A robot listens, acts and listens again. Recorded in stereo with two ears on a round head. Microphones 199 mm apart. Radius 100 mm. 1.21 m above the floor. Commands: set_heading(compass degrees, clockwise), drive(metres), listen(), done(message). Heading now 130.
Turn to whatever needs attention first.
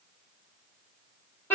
listen()
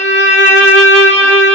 listen()
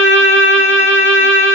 done("I can't make out anything urgent, only a violin.")